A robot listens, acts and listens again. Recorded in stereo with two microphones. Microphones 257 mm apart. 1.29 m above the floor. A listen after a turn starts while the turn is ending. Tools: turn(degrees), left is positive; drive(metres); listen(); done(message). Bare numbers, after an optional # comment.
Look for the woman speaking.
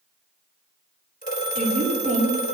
# The woman speaking: about 25° right or 155° right.
turn(-25)
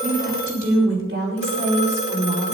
# So it is at 135° right.
turn(-135)
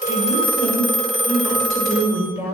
# The woman speaking is now 15° right.
turn(-15)
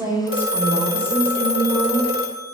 done("Facing the woman speaking.")